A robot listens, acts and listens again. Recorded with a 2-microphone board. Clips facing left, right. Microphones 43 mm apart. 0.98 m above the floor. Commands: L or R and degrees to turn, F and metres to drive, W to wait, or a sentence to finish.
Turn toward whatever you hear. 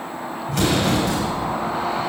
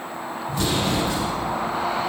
L70
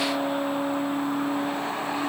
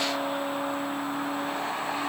W
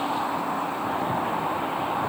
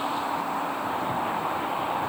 I heard an explosion, but can't make it out now. It was about straight ahead or 40° left.